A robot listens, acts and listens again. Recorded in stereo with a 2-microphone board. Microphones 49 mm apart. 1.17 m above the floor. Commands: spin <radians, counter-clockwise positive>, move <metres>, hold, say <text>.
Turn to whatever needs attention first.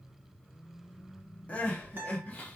spin 0.52
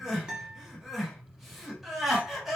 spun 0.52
say Facing the crying, under 1 m away.